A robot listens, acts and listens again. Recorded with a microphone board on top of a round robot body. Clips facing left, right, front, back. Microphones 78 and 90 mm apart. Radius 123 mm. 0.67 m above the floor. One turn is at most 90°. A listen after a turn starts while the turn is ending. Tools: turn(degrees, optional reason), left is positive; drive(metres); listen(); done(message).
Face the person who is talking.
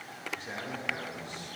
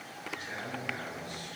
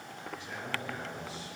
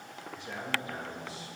turn(degrees=90, reason="The man speaking: 150° left.")
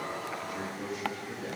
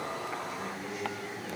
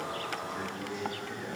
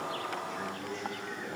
turn(degrees=80, reason="The man speaking is now 80° left.")
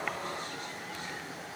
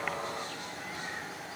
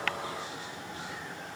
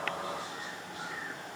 listen()
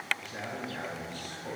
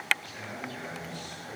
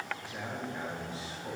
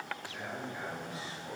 turn(degrees=55, reason="The man speaking is now 55° left.")
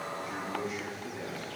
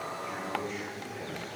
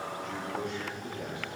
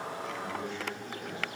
turn(degrees=10, reason="The man speaking is now 10° left.")
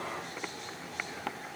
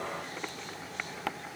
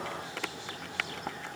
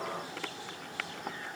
listen()
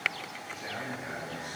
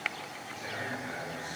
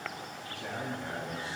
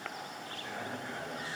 done("Facing the man speaking, over 4 m away.")